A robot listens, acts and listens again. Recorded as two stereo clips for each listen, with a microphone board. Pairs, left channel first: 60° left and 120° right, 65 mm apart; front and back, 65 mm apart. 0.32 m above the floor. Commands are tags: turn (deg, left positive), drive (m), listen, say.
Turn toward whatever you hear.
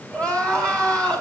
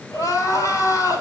<say>Facing the crying, 2 to 4 m away.</say>